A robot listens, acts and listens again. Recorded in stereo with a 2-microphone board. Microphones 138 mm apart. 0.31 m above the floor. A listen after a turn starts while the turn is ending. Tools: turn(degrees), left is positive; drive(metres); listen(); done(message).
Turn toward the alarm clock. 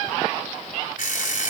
turn(degrees=70)
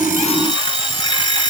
turn(degrees=35)
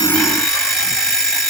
done("Found it: an alarm clock, straight ahead.")